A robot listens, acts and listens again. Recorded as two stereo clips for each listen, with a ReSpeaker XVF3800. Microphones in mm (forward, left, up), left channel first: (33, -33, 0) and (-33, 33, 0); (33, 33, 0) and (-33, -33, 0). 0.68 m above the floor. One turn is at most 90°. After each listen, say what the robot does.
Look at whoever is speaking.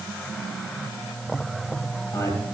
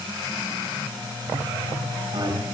Turn 90° right.
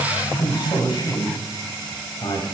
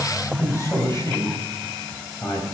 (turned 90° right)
Turn 10° right.
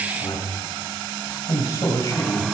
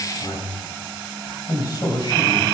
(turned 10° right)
Facing the man speaking, 2 to 4 m away.